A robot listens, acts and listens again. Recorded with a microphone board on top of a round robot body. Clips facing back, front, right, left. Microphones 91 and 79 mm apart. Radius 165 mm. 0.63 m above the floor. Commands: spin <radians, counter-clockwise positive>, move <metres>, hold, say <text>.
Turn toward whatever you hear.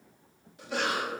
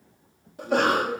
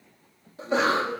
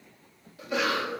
spin -0.61
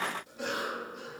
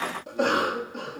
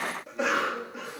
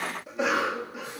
say Found it: a cough, straight ahead.